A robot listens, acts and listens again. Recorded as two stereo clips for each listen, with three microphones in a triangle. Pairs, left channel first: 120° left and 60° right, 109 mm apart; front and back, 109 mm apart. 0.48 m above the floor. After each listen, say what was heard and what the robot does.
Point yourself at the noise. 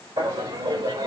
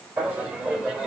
The laughter: 105° right. Turn 105° right.
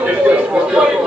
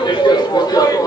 The laughter is now 15° left. Turn 15° left.
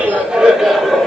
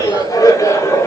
The laughter is now 40° left. Turn 40° left.
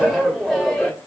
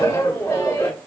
The laughter is now 45° left. Turn 45° left.
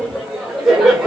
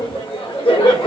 The laughter is now 20° left. Turn 20° left.
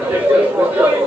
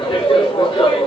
Found it: laughter, straight ahead.